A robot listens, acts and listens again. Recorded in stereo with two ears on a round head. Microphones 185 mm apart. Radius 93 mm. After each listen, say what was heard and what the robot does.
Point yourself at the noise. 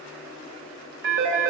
The phone ringing: about 60° right or 120° right. Turn 60° right.
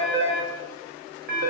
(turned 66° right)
So it is at 50° right. Turn 50° right.
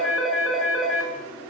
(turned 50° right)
Facing the phone ringing, over 4 m away.